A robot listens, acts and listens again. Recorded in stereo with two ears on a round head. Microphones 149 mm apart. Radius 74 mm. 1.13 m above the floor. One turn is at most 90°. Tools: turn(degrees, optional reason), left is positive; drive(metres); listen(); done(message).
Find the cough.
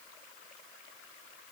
listen()
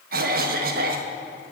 turn(degrees=-55, reason="The cough: about 55° right or 125° right.")
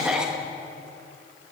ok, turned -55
done("Found it: a cough, straight ahead, 1 to 2 m away.")